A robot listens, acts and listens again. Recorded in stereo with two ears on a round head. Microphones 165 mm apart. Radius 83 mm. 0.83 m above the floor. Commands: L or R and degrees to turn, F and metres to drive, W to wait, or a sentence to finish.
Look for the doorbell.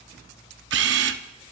W
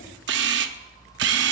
W
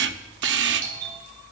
R45
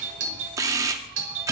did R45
R85
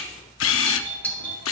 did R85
L10
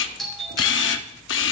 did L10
Found it: a doorbell, straight ahead.